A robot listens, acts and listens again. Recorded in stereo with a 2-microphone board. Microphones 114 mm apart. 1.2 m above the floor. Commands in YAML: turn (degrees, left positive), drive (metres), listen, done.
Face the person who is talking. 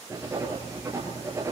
listen: true
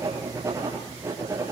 listen: true
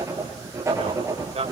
turn: -60
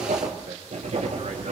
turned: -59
turn: -65
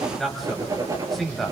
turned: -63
done: "Facing the man speaking, over 4 m away."